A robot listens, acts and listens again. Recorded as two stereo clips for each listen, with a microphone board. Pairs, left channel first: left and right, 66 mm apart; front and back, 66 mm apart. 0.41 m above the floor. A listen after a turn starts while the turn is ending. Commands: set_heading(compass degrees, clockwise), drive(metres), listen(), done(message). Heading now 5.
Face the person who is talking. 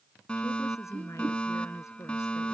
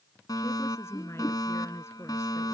set_heading(320)
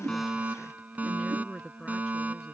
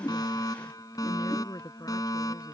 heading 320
set_heading(310)
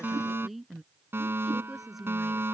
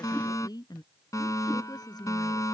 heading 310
done("Found it: a woman speaking, straight ahead.")